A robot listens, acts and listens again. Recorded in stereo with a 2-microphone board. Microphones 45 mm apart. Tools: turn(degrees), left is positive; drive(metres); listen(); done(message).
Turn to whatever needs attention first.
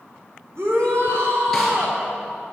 turn(degrees=-70)
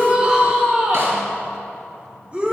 turn(degrees=-25)
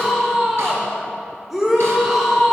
done("Found it: a shout, straight ahead, 1 to 2 m away.")